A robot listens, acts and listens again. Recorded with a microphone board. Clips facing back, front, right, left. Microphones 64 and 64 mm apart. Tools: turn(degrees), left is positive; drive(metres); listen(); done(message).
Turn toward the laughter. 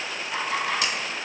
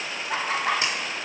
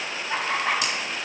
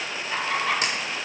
turn(degrees=-20)
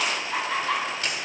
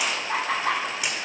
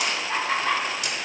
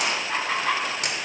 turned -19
turn(degrees=10)
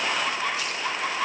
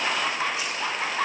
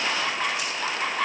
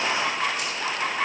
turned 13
turn(degrees=10)
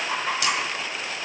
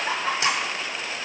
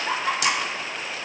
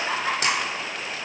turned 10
done("Found it: laughter, straight ahead, over 4 m away.")